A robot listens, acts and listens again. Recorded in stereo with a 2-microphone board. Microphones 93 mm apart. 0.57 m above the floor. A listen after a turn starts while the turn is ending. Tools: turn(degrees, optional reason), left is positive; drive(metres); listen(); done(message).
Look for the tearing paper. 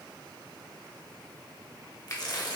turn(degrees=45, reason="The tearing paper: about 45° left or 135° left.")
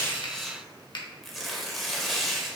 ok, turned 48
done("Found it: tearing paper, straight ahead, under 1 m away.")